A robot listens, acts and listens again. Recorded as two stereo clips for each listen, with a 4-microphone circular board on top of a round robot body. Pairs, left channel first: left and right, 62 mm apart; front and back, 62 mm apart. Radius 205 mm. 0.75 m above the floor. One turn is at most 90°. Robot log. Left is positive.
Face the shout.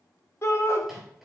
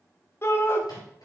note: The shout: 45° left.
cmd yaw +45
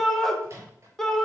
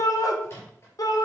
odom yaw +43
end: Found it: a shout, straight ahead, 1 to 2 m away.